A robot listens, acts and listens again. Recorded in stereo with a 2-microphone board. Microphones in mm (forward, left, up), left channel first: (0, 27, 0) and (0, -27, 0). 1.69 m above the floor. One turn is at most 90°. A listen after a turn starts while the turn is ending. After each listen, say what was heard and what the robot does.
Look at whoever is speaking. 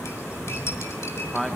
Turn 30° left.
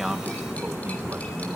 Keep listening.
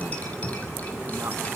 Keep listening.
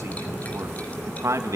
So it is at 70° right. Turn 70° right.
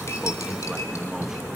Keep listening.
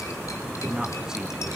The man speaking is now 10° right. Turn 10° right.
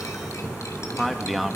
Found it: a man speaking, straight ahead.